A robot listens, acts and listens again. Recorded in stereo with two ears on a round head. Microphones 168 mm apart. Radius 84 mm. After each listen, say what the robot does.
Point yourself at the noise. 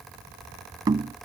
Turn 20° right.
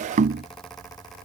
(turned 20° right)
Turn 140° right.
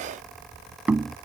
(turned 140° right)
Facing the knocking.